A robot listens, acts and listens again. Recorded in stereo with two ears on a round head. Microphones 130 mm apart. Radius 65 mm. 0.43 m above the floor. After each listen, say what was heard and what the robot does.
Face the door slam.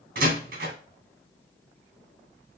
Turn 90° right.
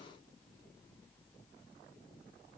Facing where the door slam came from. I can't hear it now.